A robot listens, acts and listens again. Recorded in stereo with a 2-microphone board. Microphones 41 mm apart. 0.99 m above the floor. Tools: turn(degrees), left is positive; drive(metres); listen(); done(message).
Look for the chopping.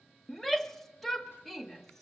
listen()
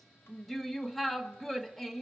listen()
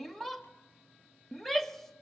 done("I can't make out chopping to turn to.")